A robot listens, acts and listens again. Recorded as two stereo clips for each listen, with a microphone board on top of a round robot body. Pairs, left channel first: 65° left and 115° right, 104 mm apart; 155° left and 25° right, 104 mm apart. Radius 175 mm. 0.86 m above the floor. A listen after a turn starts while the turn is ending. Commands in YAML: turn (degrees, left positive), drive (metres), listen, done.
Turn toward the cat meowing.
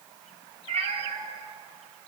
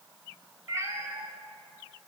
turn: -85
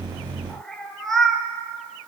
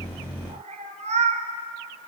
turn: -20
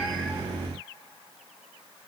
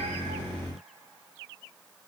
listen: true
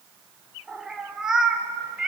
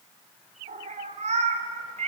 turn: -30
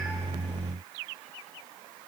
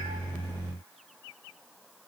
listen: true
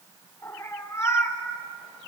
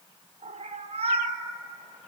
done: "Found it: a cat meowing, straight ahead, 1 to 2 m away."